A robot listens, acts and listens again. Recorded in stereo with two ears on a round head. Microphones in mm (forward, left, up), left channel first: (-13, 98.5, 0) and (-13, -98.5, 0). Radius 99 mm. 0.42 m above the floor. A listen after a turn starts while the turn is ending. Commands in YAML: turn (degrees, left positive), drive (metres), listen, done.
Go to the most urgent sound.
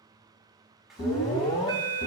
turn: 20
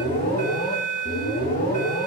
turn: 140
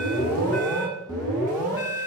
turn: 15
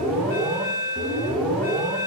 drive: 1.0
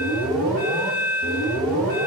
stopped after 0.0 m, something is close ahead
done: "Something is in my way. I am facing the alarm but have not reached it."